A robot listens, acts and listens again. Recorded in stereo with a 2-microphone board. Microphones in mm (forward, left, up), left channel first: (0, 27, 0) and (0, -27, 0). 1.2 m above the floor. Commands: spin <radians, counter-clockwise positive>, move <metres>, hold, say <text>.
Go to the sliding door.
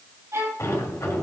spin 1.13
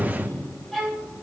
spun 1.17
spin 0.79
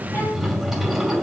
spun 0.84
move 1.0
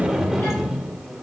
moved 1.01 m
move 1.0
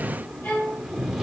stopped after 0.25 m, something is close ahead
say I am next to the sliding door.